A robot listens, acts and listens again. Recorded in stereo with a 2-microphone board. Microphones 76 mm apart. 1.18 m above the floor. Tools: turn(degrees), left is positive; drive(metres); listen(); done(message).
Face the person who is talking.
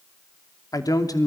turn(degrees=55)
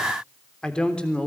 turn(degrees=15)
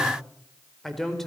done("Facing the man speaking.")